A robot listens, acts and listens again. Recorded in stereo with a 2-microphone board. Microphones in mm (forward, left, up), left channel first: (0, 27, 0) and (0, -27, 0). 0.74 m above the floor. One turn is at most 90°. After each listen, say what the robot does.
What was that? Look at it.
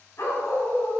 Turn 60° left.
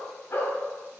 Turn 50° left.
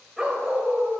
Turn 25° right.
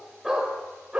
Turn 25° right.
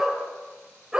Turn 15° right.
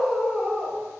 Facing the dog barking.